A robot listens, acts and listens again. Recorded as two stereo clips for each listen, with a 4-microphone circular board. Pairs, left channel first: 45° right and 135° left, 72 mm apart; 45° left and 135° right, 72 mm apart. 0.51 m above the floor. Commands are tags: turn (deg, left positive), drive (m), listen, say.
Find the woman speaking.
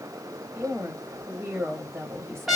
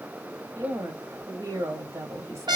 <turn deg="-175"/>
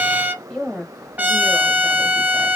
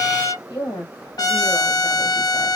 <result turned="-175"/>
<turn deg="30"/>
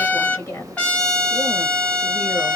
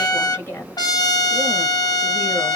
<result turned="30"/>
<turn deg="-10"/>
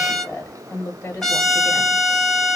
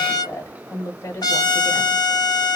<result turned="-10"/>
<say>Facing the woman speaking.</say>